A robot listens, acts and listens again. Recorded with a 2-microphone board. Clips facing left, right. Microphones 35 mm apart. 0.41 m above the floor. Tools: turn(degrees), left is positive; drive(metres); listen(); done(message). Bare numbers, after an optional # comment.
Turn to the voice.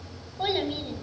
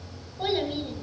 turn(30)
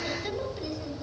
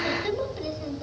# So it is at 15° right.
turn(-15)
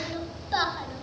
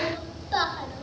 done("Facing the child speaking, 1 to 2 m away.")